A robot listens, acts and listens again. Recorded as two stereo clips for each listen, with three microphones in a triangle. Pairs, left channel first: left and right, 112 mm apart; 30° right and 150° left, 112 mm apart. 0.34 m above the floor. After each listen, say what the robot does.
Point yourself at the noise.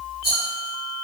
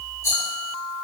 Turn 95° right.
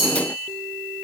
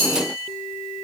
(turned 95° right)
Turn 40° right.
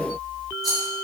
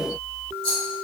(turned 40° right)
Found it: a rattle, straight ahead, 1 to 2 m away.